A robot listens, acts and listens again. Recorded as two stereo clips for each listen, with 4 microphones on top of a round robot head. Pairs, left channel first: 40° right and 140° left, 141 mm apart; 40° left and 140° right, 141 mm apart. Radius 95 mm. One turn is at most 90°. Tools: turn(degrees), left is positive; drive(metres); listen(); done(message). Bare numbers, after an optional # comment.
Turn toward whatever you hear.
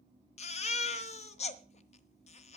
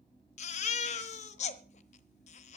done("Facing the baby crying, 1 to 2 m away.")